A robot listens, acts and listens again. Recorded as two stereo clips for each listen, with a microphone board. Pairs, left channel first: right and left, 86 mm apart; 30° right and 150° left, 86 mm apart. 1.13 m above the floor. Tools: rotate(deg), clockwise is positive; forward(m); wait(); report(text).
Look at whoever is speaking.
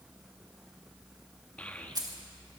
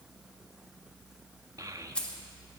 rotate(165)
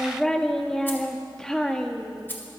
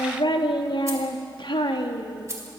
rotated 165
report("Facing the child speaking.")